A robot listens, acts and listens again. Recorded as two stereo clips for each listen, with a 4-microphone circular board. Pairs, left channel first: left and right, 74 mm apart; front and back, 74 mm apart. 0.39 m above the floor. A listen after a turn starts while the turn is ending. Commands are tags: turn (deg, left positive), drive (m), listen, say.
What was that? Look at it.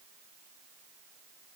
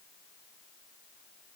<listen/>
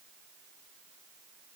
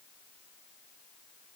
<listen/>
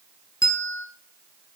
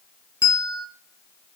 <turn deg="45"/>
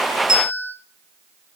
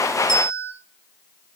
<turn deg="-10"/>
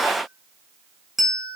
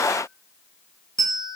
<say>Found it: a bell, straight ahead, under 1 m away.</say>